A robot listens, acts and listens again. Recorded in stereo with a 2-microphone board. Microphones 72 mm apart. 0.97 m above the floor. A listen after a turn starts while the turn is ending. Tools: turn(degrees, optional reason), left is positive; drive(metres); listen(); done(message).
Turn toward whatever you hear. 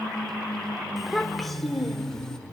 turn(degrees=30)
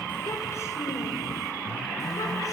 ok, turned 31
listen()
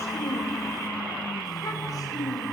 turn(degrees=125, reason="So it is at 125° left.")
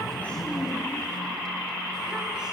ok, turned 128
listen()
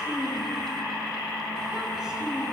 listen()
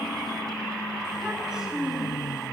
done("Found it: a child speaking, straight ahead, over 4 m away.")